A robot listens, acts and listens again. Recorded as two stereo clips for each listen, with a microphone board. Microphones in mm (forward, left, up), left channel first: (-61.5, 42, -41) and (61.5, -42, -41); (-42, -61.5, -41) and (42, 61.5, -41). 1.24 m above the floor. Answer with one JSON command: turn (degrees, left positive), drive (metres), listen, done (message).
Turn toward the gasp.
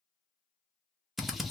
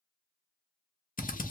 {"listen": true}
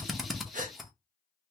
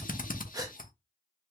{"turn": -10}
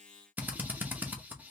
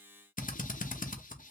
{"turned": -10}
{"done": "I heard a gasp from this way, but can't make it out now."}